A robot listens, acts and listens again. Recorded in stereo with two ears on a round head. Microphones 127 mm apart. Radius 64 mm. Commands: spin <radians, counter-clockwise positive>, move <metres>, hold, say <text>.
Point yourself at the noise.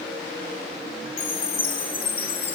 spin 0.70
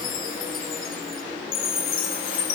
spin 1.75
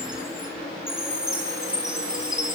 say Facing the chime.